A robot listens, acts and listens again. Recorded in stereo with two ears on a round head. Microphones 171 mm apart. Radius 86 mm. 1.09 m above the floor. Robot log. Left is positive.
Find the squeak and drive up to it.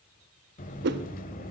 cmd idle
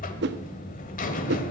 cmd idle
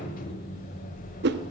end: I can't make out a squeak, only a whoosh and a buzzer.